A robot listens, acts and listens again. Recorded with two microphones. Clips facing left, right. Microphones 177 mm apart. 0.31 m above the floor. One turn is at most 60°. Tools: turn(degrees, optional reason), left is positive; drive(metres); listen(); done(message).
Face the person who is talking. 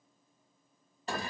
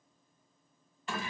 listen()
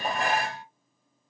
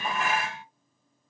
listen()
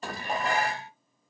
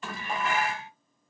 done("I can't make out anyone speaking to turn to.")